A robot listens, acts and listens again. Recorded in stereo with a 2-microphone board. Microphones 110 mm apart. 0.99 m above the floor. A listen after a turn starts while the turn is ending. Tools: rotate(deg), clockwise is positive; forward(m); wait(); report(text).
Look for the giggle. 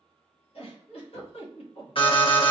rotate(-60)
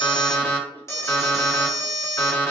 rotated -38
wait()
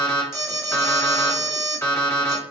wait()
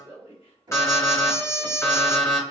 rotate(-70)
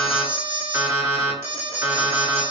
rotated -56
rotate(-10)
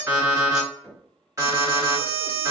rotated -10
wait()
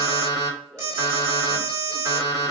report("Facing where the giggle came from. I can't hear it now.")